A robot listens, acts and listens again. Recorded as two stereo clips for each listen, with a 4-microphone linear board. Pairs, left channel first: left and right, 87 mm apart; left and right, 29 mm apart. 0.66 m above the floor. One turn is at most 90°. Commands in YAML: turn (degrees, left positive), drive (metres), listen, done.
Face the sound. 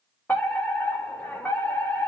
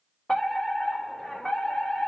turn: 20
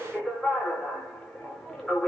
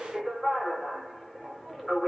done: "Facing the fire alarm, over 4 m away."